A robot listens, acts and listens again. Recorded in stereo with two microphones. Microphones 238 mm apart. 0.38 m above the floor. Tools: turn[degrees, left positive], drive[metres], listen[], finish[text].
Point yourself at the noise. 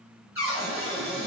Thought: The cupboard door: about 60° left or 120° left.
Action: turn[60]
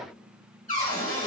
Thought: So it is at 40° left.
Action: turn[40]
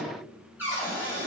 Thought: The cupboard door is now 10° right.
Action: turn[-10]
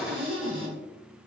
Action: finish[Facing the cupboard door, 1 to 2 m away.]